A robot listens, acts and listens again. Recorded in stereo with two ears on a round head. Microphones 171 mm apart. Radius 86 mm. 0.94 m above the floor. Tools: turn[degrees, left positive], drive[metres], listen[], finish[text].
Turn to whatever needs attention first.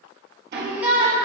Action: turn[-30]
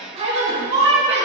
Thought: So it is at 145° right.
Action: turn[-145]
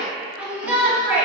Thought: The shout is now 10° right.
Action: turn[-10]
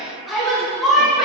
Action: finish[Found it: a shout, straight ahead.]